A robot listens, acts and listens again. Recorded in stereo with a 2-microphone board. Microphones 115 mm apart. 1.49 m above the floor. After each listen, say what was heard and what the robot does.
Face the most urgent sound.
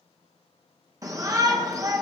The shout: about 30° right or 150° right. Turn 30° right.
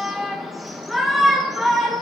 Found it: a shout, straight ahead, 1 to 2 m away.